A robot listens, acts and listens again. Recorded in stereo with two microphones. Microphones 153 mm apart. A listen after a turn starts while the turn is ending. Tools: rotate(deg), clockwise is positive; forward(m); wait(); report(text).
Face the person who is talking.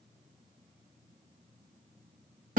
wait()
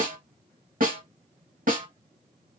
wait()
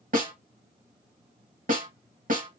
report("I can't make out anyone speaking to turn to.")